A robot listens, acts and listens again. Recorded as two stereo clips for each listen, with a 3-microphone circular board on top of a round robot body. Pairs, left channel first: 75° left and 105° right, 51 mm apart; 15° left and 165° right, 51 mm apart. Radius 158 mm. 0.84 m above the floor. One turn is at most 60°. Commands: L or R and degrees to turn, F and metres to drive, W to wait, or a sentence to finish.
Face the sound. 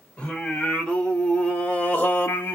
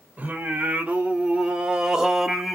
L60
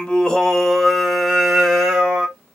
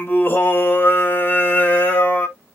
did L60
R30
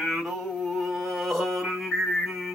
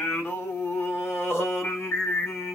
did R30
R15
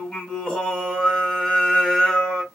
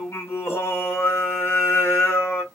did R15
Found it: singing, straight ahead, 1 to 2 m away.